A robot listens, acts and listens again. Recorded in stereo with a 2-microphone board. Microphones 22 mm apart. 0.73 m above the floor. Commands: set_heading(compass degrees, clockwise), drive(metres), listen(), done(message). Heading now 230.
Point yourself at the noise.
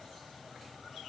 listen()
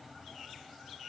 listen()
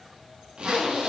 set_heading(285)
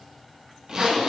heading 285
set_heading(325)
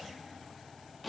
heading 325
done("Facing the zipper.")